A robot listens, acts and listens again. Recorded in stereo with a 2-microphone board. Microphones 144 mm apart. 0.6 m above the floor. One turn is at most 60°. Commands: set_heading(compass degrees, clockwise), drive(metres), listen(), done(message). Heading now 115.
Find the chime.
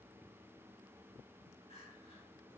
listen()
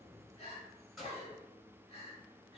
listen()
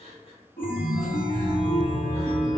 set_heading(55)
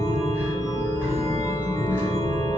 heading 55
set_heading(35)
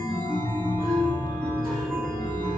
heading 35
done("Found it: a chime, straight ahead.")